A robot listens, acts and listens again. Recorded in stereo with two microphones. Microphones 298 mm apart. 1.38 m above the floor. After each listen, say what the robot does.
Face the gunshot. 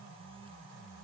Keep listening.
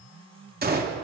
Turn 30° right.
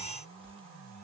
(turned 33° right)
Keep listening.
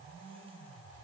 I heard a gunshot, but can't make it out now. It was about straight ahead or 115° right.